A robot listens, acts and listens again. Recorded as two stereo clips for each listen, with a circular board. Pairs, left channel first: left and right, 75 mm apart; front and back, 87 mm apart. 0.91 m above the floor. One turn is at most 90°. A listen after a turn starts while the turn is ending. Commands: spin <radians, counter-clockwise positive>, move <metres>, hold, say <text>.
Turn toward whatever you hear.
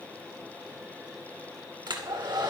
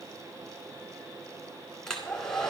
spin -1.48
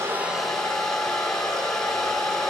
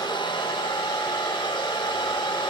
say Facing the hair dryer, 2 to 4 m away.